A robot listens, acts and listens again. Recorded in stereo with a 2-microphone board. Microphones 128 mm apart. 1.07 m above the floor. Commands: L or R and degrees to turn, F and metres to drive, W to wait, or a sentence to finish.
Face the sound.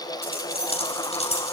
L55
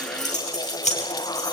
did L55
L65
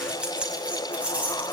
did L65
R10
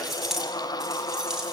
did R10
Facing the keys jangling.